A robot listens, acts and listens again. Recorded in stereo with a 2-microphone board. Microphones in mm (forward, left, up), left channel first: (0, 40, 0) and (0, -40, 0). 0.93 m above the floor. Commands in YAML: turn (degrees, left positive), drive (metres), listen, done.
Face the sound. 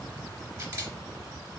turn: -40
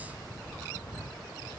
listen: true
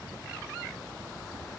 listen: true
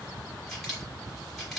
done: "Facing the camera shutter."